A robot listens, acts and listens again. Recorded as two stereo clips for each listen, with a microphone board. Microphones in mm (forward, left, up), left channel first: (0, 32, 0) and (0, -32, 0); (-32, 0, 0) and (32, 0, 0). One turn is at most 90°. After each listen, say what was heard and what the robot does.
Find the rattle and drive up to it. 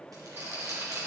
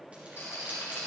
The rattle: 135° right. Turn 90° right.
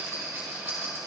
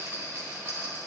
The rattle is now 45° right. Turn 45° right.
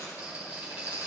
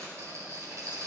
The rattle is now 20° right. Turn 20° right.
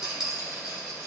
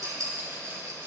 Drive 1.0 m forward.
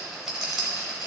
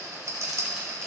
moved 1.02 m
Drive 1.0 m forward.
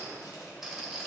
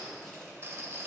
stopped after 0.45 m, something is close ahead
The rattle is now 10° right. Turn 10° right.
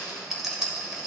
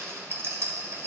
I am next to the rattle.